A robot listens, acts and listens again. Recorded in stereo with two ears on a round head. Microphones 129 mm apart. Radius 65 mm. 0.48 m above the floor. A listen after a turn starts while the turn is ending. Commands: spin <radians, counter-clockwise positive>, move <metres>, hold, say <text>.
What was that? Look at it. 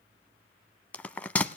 spin 0.52
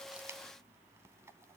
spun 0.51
hold
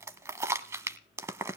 spin -0.35
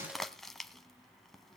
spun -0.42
say Facing the bell.